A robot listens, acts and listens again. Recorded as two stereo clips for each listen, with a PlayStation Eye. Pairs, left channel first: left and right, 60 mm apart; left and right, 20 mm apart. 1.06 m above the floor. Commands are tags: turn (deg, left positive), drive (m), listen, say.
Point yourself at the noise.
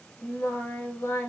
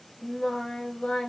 <turn deg="60"/>
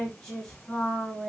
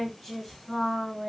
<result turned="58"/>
<turn deg="15"/>
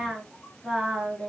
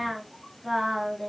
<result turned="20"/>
<say>Facing the singing.</say>